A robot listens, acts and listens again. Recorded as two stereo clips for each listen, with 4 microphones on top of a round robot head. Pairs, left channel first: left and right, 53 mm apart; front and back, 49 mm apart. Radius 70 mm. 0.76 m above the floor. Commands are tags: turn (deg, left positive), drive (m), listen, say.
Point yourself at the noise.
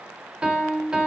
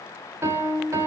<turn deg="-165"/>
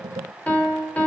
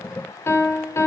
<turn deg="25"/>
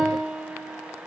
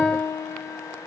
<turn deg="-10"/>
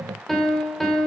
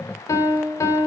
<say>Found it: a piano, straight ahead.</say>